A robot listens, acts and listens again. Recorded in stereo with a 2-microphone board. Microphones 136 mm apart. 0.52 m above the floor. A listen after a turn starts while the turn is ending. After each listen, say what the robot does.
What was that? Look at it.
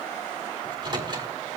Turn 35° right.
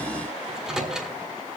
Facing the microwave, 1 to 2 m away.